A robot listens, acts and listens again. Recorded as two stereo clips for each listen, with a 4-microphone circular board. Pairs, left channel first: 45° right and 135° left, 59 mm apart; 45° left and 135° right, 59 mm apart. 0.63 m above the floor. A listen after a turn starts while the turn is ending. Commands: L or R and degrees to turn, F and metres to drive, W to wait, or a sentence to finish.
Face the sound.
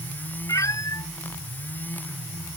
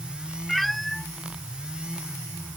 R40
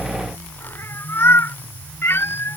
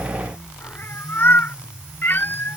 Found it: a cat meowing, straight ahead.